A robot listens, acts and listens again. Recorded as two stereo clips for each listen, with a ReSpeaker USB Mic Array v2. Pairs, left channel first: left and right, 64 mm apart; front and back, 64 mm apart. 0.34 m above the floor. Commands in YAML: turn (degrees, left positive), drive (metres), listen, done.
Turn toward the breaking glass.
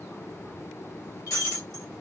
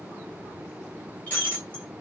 turn: 65
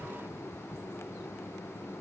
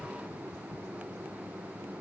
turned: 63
done: "I heard breaking glass from this way, but can't make it out now."